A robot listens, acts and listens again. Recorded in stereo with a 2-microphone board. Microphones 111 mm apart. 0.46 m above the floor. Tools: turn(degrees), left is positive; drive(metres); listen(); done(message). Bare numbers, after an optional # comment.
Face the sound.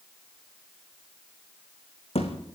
# The thud: about 70° left or 110° left.
turn(70)
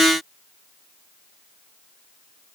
listen()
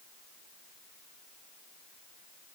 done("I heard a thud, but can't make it out now. It was about straight ahead or 40° left.")